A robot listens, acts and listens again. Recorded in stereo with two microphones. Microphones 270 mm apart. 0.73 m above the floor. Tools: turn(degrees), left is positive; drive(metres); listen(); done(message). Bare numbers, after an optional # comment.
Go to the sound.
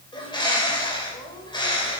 # The bird: about 15° left or 165° left.
turn(15)
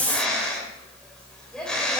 drive(1.0)
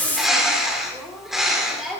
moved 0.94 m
drive(1.0)
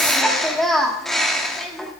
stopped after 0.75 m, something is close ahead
done("I am next to the bird.")